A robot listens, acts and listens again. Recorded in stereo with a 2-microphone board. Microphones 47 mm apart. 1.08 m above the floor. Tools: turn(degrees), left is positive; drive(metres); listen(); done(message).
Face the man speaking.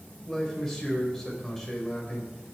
turn(degrees=30)
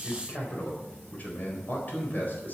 turn(degrees=135)
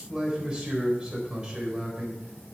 turn(degrees=-20)
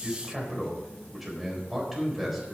done("Found it: a man speaking, straight ahead.")